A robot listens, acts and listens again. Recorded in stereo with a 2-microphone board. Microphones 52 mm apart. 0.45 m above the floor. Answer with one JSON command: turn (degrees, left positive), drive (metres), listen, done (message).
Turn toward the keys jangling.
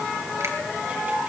{"listen": true}
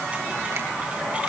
{"listen": true}
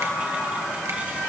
{"done": "I can't make out keys jangling to turn to."}